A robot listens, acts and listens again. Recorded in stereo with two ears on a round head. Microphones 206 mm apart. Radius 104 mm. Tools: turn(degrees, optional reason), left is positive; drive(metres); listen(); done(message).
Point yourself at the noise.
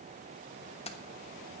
turn(degrees=25, reason="The keys jangling: about 25° left or 155° left.")
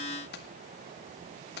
turn(degrees=130, reason="So it is at 130° left.")
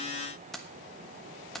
done("Found it: keys jangling, straight ahead.")